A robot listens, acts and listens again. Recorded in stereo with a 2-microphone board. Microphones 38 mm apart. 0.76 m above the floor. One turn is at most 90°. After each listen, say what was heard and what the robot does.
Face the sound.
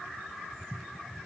Keep listening.
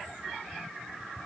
Keep listening.
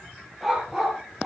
Turn 30° right.
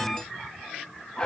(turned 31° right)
So it is at 20° left. Turn 20° left.
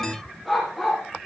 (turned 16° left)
Found it: a dog barking, straight ahead, over 4 m away.